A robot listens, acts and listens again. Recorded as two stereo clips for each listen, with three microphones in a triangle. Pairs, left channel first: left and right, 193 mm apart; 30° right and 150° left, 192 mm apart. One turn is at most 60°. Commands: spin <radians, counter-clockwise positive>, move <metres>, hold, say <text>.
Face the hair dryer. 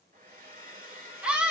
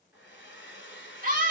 spin -0.87
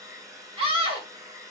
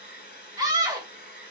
spin -0.26
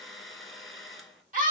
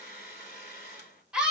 say Found it: a hair dryer, straight ahead.